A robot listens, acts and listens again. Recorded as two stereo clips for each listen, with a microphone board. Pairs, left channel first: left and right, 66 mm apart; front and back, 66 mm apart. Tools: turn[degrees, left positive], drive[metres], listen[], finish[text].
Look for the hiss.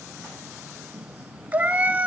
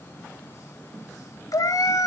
Action: listen[]
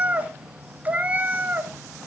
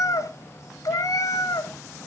Action: listen[]
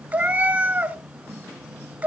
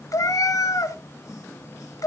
Action: finish[I can't make out a hiss to turn to.]